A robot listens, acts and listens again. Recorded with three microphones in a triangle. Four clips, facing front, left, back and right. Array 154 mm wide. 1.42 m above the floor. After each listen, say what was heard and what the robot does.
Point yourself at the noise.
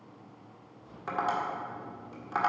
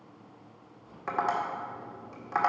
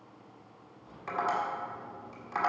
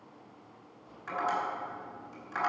The tapping: 70° left. Turn 70° left.
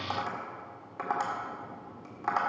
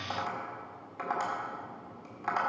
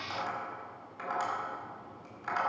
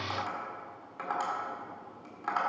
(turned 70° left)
Facing the tapping.